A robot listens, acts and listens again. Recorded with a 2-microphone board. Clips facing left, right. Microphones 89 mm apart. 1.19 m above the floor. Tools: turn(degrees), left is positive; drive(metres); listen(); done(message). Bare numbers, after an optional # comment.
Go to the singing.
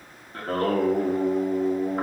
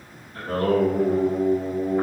# The singing: about 45° left or 135° left.
turn(45)
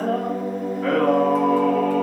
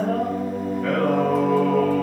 # So it is at 90° left.
turn(90)
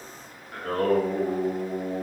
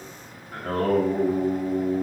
drive(1.0)
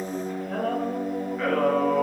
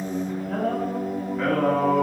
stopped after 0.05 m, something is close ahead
done("Something is in my way. I am facing the singing but have not reached it.")